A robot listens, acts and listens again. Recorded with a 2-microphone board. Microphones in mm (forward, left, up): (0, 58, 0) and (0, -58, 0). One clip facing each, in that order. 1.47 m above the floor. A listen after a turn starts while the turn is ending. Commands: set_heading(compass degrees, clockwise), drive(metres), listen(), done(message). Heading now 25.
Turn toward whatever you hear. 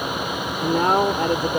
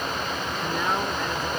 set_heading(335)
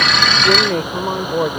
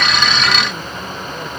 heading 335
set_heading(255)
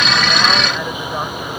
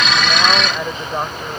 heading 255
set_heading(270)
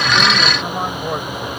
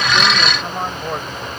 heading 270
done("Found it: a man speaking, straight ahead.")